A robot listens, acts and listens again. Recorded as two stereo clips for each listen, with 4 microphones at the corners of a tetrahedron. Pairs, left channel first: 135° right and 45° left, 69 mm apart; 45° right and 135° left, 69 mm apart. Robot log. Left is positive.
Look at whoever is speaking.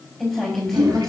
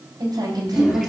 note: The woman speaking: 140° left.
cmd yaw +140
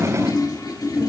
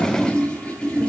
cmd idle
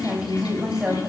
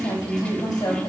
note: The woman speaking is now 30° right.
cmd yaw -30
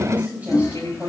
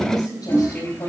note: The woman speaking is now 20° right.
cmd yaw -20
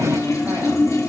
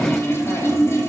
cmd idle
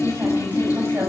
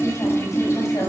cmd idle
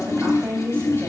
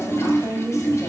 note: The woman speaking is now 10° right.
cmd yaw -10
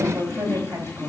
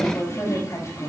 end: Facing the woman speaking, over 4 m away.